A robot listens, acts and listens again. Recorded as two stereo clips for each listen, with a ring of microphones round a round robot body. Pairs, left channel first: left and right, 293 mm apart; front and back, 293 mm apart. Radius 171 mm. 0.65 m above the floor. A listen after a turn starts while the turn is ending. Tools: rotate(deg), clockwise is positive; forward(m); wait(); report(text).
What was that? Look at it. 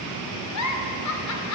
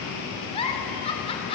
rotate(-70)
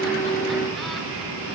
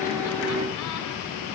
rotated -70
wait()
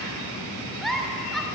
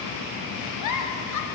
report("Found it: a giggle, straight ahead, 2 to 4 m away.")